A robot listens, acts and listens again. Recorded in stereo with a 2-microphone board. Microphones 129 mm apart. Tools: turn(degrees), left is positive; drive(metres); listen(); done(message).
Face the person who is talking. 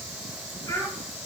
turn(degrees=25)
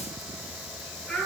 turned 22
done("Found it: a child speaking, straight ahead.")